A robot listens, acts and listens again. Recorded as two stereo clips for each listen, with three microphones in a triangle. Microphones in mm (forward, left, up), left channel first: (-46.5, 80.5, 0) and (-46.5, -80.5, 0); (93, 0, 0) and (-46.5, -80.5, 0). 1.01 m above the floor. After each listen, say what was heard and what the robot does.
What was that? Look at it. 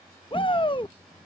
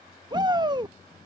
The shout: 150° left. Turn 150° left.
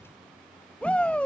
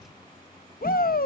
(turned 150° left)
The shout is now 10° left. Turn 10° left.
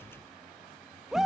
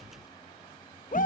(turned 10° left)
Facing the shout.